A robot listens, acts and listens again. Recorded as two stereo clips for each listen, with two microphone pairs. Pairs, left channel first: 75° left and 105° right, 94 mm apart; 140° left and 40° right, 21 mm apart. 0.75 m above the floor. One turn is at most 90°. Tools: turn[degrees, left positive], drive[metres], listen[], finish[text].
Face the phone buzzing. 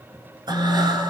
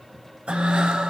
Thought: The phone buzzing: 115° left.
Action: turn[90]
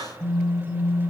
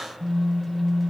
Thought: The phone buzzing is now 60° left.
Action: turn[60]
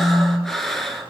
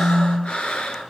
Thought: The phone buzzing is now 15° right.
Action: turn[-15]
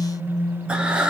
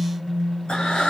Action: finish[Facing the phone buzzing.]